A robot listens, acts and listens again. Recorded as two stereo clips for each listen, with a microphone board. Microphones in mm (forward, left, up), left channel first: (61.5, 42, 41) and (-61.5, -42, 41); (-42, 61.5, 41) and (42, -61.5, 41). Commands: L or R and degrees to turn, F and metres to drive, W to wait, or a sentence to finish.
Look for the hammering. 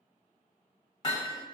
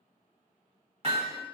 R20
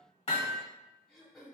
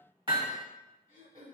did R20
Found it: hammering, straight ahead.